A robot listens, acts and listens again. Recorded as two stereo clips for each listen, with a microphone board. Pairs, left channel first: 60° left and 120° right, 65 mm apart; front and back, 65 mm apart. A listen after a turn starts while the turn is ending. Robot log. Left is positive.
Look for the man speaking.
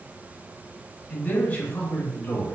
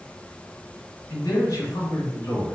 note: The man speaking: 10° left.
cmd yaw +10
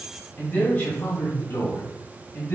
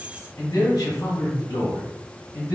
note: The man speaking is now 10° left.
cmd yaw +10
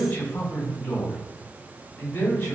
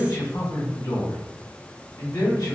end: Found it: a man speaking, straight ahead.